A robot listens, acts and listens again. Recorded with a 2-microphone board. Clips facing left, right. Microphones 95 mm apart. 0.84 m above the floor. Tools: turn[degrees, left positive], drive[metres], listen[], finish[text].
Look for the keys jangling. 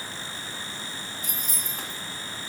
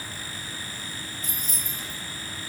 Thought: The keys jangling: about 35° right or 145° right.
Action: turn[-35]
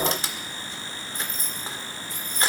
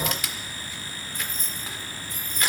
Thought: So it is at 130° right.
Action: turn[-130]
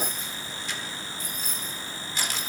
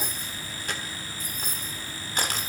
Thought: The keys jangling is now 55° right.
Action: turn[-55]
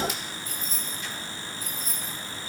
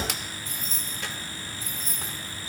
Thought: The keys jangling is now 30° right.
Action: turn[-30]
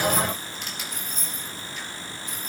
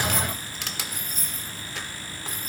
Thought: The keys jangling is now 10° right.
Action: turn[-10]
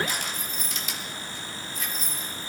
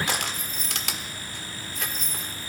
Action: finish[Found it: keys jangling, straight ahead.]